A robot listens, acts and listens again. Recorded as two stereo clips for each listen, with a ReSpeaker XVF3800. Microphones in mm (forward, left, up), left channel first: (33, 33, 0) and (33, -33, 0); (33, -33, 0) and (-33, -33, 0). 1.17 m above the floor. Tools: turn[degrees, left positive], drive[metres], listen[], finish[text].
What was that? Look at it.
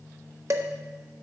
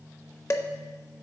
Thought: The dishes clattering: 50° right.
Action: turn[-50]
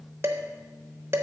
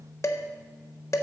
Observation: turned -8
Thought: The dishes clattering is now 40° right.
Action: turn[-40]
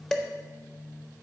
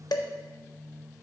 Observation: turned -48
Action: finish[Found it: dishes clattering, straight ahead, under 1 m away.]